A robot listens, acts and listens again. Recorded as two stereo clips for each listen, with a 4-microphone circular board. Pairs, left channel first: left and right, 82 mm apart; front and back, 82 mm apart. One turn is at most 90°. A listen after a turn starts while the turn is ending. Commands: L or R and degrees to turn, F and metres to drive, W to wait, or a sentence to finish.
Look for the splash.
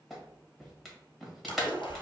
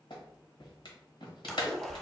L85
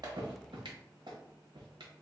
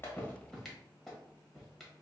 I heard a splash from this way, but can't make it out now.